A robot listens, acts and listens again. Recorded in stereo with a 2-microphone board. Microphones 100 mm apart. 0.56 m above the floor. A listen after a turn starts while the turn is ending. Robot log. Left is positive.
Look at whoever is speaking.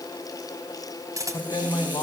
note: The man speaking: about 45° left or 135° left.
cmd yaw +45
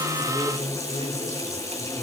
note: So it is at 100° left.
cmd yaw +100
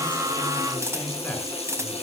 cmd idle
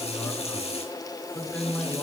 note: The man speaking is now 15° left.
cmd yaw +15
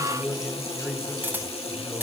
note: The man speaking is now 10° left.
cmd yaw +10
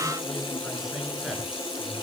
cmd idle
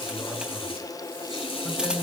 end: Found it: a man speaking, straight ahead, over 4 m away.